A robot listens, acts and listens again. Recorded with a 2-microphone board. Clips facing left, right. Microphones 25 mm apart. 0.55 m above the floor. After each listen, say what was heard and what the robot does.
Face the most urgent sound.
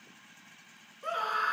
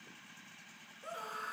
The scream: about 40° left or 140° left. Turn 40° left.
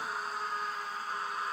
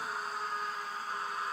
Facing the scream.